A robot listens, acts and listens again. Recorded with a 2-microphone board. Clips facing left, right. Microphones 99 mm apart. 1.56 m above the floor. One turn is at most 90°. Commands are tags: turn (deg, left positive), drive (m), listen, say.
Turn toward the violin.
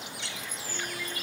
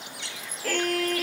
<turn deg="-75"/>
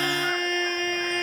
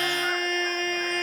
<say>Found it: a violin, straight ahead.</say>